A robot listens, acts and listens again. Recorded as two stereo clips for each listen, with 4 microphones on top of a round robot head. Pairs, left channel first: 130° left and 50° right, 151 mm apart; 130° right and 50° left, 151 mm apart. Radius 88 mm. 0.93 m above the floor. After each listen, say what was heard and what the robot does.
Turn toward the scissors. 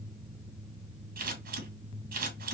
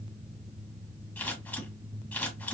The scissors: 50° right. Turn 50° right.
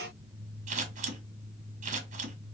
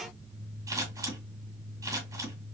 The scissors is now 15° right. Turn 15° right.
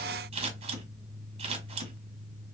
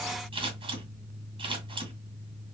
Found it: scissors, straight ahead.